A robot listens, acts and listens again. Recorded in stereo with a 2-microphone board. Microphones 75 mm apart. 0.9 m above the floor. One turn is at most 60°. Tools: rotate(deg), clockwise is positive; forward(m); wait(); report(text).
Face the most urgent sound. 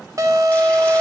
rotate(50)
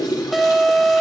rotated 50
report("Found it: an alarm, straight ahead.")